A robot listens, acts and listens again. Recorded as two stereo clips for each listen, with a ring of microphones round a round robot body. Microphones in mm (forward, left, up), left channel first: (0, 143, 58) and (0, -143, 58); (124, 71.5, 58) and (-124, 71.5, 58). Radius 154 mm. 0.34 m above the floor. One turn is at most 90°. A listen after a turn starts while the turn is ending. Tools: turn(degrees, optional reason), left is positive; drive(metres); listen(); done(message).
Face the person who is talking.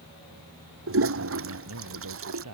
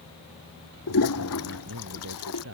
turn(degrees=-90, reason="The man speaking: 130° right.")
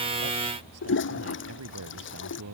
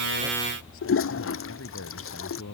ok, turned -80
turn(degrees=-50, reason="The man speaking is now 50° right.")
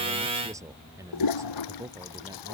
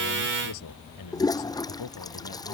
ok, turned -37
turn(degrees=-10, reason="The man speaking is now 10° right.")
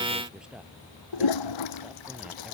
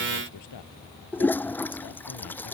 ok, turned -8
done("Found it: a man speaking, straight ahead.")